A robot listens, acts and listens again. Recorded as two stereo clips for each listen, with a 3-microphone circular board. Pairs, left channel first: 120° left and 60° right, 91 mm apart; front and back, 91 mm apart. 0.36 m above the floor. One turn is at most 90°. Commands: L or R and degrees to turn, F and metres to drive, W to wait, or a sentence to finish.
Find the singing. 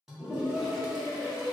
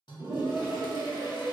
L90
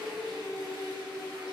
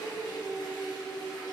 L30
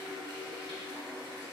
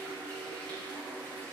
W
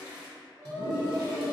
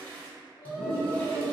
L10
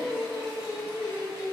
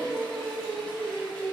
Found it: singing, straight ahead, 1 to 2 m away.